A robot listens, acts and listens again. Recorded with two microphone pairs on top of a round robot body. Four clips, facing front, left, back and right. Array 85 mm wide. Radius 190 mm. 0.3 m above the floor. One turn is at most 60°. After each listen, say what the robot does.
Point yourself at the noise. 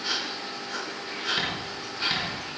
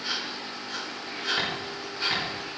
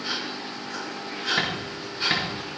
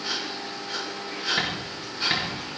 Keep listening.
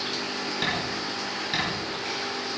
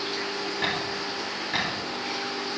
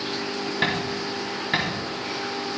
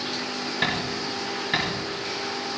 Turn 60° right.
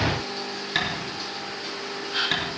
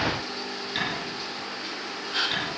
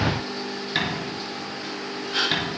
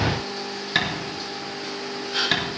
Turn 60° right.
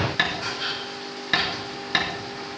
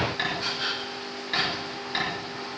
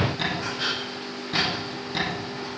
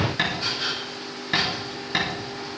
Turn 20° right.
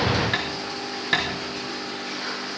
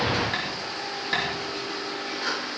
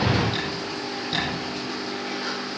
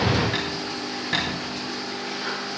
Facing the tapping.